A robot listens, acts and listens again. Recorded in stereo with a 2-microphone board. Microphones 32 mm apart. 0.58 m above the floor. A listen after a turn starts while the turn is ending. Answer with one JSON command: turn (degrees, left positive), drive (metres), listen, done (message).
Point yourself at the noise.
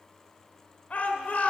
{"turn": 50}
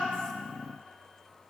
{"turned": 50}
{"listen": true}
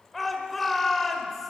{"done": "Facing the shout, 2 to 4 m away."}